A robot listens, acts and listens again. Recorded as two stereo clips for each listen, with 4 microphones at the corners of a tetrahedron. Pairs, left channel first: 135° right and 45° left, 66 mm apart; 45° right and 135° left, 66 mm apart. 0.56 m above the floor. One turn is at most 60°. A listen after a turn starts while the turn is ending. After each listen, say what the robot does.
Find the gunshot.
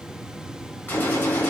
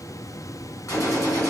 Turn 60° right.
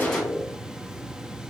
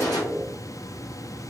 Turn 15° right.
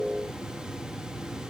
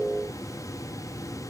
I heard a gunshot from this way, but can't make it out now.